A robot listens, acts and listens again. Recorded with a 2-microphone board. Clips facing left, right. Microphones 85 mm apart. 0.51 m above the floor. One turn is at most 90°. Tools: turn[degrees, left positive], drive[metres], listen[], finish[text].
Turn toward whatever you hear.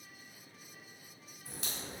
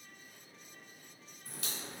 Thought: The crack: about 25° left or 155° left.
Action: turn[25]
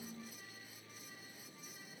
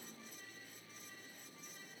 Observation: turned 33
Action: listen[]
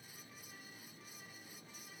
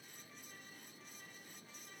Action: finish[I heard a crack, but can't make it out now. It was about 5° right or 120° left.]